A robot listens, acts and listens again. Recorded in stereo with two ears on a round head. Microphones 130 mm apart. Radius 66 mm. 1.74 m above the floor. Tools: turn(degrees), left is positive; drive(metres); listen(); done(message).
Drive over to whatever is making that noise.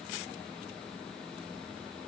listen()
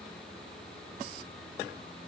listen()
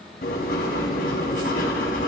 turn(degrees=70)
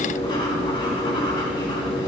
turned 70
turn(degrees=35)
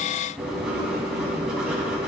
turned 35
drive(metres=1.0)
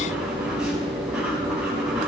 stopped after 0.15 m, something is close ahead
done("Something is in my way. I am facing the writing but have not reached it.")